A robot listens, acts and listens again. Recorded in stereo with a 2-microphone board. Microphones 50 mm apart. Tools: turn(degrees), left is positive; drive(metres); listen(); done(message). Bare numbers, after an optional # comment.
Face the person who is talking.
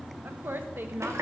# The woman speaking: about 50° right or 130° right.
turn(-50)
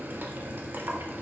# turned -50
listen()
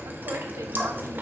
listen()
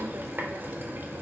done("I heard a woman speaking, but can't make it out now. It was about straight ahead or 80° right.")